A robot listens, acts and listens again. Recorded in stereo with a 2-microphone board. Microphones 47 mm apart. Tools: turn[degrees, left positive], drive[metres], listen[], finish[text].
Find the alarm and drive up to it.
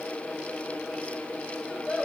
Action: listen[]
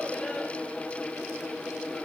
Action: listen[]
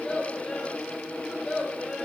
Action: finish[I can't make out an alarm, only a child speaking.]